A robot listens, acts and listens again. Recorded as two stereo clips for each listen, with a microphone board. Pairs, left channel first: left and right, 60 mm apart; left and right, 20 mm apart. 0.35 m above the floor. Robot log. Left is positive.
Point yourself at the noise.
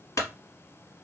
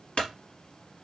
note: The clunk: about 65° left or 115° left.
cmd yaw +65
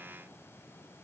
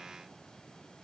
cmd idle
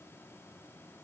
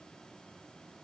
end: I heard a clunk, but can't make it out now. It was about straight ahead or 50° left.